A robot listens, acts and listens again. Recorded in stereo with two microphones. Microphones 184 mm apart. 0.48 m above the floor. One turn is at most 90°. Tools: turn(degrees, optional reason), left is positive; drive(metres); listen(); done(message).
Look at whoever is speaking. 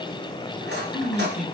turn(degrees=35, reason="The man speaking: about 35° left or 145° left.")
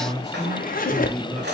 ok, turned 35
done("Found it: a man speaking, straight ahead.")